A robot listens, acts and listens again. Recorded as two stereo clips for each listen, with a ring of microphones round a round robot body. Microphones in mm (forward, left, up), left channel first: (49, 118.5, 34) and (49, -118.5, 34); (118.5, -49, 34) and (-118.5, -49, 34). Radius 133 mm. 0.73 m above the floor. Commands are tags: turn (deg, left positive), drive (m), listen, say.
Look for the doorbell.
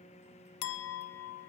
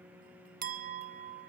<listen/>
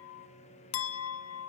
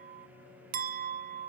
<listen/>
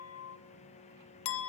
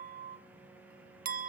<say>I can't make out a doorbell, only a clink.</say>